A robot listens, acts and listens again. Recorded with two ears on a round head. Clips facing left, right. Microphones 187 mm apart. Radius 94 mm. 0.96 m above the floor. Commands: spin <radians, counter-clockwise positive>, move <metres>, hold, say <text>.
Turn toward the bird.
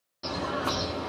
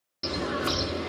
spin -0.52
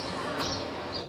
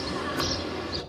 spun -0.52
spin -2.09
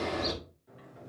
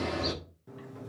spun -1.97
say Facing the bird.